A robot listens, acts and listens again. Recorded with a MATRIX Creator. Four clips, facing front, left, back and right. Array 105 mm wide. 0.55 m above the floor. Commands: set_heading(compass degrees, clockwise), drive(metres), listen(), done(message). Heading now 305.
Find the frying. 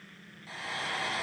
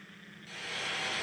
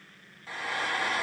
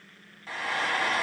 set_heading(55)
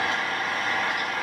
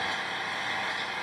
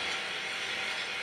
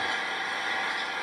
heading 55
done("Found it: frying, straight ahead.")